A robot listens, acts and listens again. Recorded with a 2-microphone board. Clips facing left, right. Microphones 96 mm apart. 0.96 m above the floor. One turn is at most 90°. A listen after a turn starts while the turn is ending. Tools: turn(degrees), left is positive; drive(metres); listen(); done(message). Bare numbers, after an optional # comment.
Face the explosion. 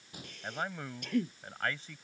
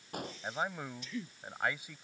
# The explosion: about 60° right or 120° right.
turn(-60)
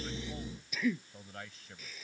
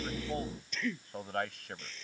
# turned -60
listen()
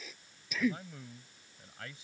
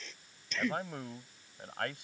done("I heard an explosion, but can't make it out now. It was about straight ahead or 60° right.")